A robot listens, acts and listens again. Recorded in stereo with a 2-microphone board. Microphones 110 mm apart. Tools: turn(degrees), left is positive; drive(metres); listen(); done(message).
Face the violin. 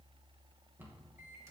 listen()
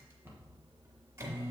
listen()
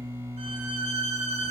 turn(degrees=-90)
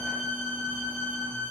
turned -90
turn(degrees=15)
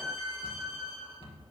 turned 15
done("Facing the violin, 1 to 2 m away.")